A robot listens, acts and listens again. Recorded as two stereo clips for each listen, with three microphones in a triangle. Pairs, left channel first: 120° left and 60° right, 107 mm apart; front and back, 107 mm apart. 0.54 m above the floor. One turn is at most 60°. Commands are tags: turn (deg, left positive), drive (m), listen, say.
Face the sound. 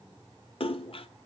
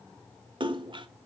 <turn deg="60"/>
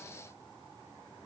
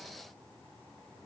<turn deg="60"/>
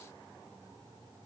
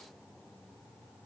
<turn deg="20"/>
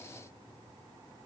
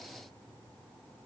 <say>Facing where the splash came from. I can't hear it now.</say>